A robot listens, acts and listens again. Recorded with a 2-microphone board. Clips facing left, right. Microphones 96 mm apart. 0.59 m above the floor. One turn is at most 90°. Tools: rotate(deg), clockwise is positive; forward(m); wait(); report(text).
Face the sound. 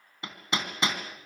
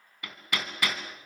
rotate(-25)
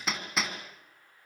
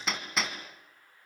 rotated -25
report("Found it: hammering, straight ahead.")